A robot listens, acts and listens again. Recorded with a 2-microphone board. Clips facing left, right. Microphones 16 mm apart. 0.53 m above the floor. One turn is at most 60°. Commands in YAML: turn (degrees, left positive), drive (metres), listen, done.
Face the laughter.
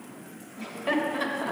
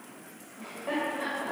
turn: 60
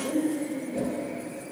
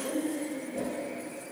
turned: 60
done: "Facing the laughter."